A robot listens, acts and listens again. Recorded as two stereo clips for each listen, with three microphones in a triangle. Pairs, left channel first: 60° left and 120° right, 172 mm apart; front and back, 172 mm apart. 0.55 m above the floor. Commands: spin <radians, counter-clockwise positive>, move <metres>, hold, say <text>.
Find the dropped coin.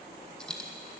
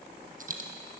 spin 2.53
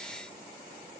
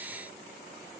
say I heard a dropped coin from this way, but can't make it out now.